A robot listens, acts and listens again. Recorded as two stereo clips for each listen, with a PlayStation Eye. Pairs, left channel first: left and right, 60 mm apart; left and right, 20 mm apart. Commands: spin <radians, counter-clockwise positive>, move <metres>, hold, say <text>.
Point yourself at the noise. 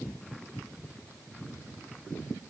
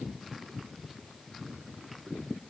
hold
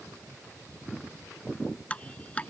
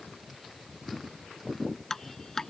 spin 0.35
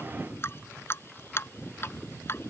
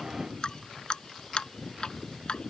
spin 2.44
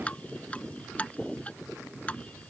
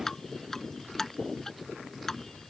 spin 0.35
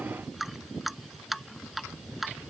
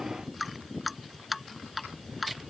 say Facing the dripping.